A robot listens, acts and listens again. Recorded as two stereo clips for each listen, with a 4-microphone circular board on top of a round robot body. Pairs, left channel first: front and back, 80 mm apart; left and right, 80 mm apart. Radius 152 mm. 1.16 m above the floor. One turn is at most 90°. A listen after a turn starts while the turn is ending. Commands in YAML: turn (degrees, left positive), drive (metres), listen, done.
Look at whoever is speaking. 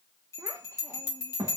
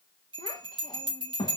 turn: 90
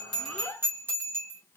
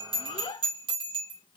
turn: 65
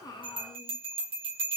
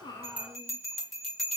listen: true
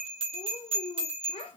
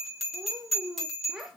done: "Found it: a child speaking, straight ahead, 1 to 2 m away."